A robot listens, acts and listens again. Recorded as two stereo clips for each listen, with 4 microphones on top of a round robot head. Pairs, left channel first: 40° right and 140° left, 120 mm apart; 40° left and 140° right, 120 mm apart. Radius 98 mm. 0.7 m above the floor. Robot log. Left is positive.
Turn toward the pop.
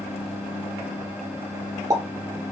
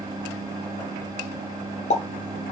note: The pop: 75° left.
cmd yaw +75
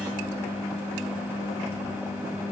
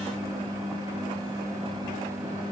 end: I heard a pop from this way, but can't make it out now.